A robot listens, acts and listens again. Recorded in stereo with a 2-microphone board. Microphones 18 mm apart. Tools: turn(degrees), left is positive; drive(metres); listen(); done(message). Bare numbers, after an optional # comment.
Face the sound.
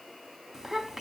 # The child speaking: about 20° right or 160° right.
turn(-20)
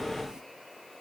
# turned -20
listen()
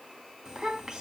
# So it is at 140° right.
turn(-140)
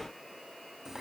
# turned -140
# The child speaking is now 25° right.
turn(-25)
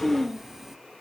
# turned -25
# The child speaking is now 10° right.
turn(-10)
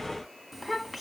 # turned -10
done("Found it: a child speaking, straight ahead, 1 to 2 m away.")